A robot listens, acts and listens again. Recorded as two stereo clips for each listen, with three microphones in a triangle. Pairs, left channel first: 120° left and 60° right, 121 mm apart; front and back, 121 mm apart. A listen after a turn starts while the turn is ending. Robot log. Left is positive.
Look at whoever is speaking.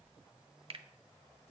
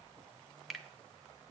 cmd idle
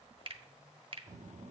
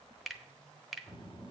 note: The child speaking: 50° right.
cmd yaw -50
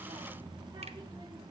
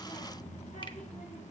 end: Facing the child speaking.